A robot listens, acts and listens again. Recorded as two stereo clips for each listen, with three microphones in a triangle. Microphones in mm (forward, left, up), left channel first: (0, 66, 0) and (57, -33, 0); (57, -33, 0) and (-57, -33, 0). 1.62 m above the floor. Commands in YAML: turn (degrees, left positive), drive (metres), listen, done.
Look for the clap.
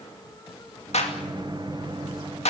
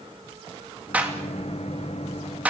turn: 105
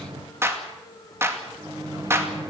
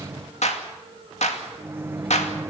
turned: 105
done: "Facing the clap, 2 to 4 m away."